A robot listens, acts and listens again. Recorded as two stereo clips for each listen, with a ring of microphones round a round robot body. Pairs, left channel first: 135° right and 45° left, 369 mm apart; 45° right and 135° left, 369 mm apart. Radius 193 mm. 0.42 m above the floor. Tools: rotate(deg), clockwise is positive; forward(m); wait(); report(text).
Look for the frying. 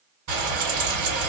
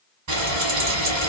rotate(-90)
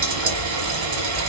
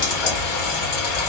report("Facing the frying, 1 to 2 m away.")